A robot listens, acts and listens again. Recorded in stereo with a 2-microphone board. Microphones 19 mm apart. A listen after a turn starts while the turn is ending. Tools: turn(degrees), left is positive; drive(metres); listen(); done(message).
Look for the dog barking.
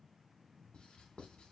listen()
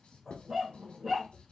turn(degrees=-25)
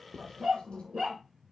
turn(degrees=-125)
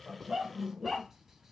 done("Found it: a dog barking, straight ahead.")